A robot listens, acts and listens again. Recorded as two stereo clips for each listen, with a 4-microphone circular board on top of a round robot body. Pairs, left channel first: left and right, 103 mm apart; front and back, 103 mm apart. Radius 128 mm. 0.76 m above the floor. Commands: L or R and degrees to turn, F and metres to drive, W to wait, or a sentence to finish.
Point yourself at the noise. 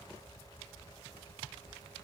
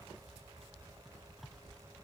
W
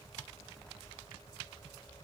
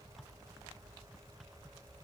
W
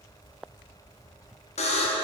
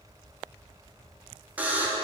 L105
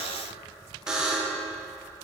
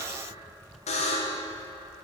R10
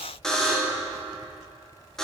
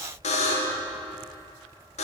Found it: a buzzer, straight ahead, under 1 m away.